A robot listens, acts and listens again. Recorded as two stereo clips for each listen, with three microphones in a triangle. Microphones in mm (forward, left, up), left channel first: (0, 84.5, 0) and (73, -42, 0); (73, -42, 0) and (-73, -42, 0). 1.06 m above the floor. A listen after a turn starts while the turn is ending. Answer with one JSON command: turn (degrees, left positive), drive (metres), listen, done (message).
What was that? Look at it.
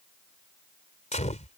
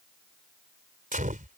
{"turn": 155}
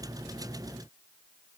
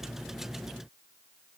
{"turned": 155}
{"done": "I heard a gunshot from this way, but can't make it out now."}